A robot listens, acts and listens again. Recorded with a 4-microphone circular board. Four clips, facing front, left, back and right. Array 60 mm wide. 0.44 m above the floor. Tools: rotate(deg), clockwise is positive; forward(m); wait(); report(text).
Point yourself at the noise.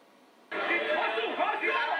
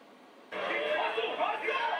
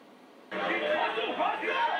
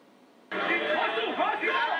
rotate(90)
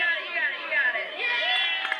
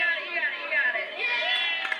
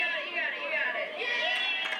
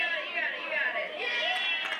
rotate(-15)
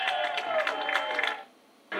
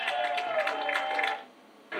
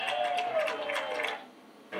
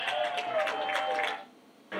report("Found it: a shout, straight ahead, over 4 m away.")